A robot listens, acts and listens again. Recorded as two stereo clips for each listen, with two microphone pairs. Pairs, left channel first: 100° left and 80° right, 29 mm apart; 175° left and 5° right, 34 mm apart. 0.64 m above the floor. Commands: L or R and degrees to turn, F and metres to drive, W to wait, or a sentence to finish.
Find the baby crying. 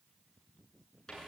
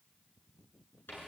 W
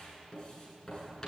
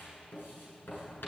W
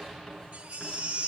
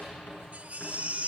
R50
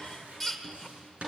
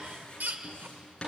L15
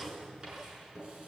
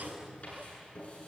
W
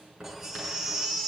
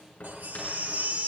Found it: a baby crying, straight ahead.